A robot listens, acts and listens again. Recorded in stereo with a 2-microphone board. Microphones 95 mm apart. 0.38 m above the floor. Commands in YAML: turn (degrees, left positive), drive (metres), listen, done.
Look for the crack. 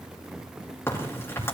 turn: 25
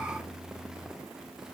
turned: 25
listen: true
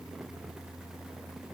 done: "I heard a crack, but can't make it out now. It was about straight ahead or 130° left."